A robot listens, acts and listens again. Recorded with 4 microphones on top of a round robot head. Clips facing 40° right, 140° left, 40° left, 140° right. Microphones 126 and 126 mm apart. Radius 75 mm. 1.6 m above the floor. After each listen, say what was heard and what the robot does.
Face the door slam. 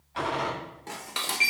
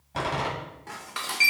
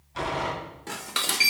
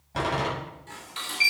The door slam: 175° right. Turn 175° right.
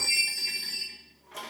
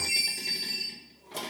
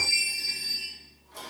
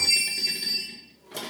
I heard a door slam from this way, but can't make it out now.